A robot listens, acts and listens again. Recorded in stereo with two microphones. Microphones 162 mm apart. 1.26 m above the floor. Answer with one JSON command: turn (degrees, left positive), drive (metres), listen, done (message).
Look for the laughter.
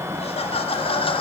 {"turn": 35}
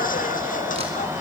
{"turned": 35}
{"turn": 115}
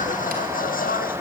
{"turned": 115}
{"turn": 70}
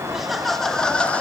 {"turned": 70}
{"turn": 10}
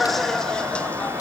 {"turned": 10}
{"done": "Found it: laughter, straight ahead, 1 to 2 m away."}